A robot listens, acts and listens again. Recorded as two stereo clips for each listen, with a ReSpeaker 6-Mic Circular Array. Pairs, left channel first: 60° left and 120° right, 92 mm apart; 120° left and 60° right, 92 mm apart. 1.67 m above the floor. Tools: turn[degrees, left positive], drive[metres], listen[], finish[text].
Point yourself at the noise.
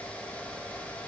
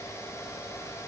Action: listen[]
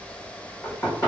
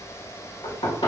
Thought: The knocking: 120° left.
Action: turn[120]
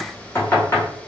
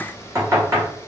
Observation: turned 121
Action: finish[Facing the knocking.]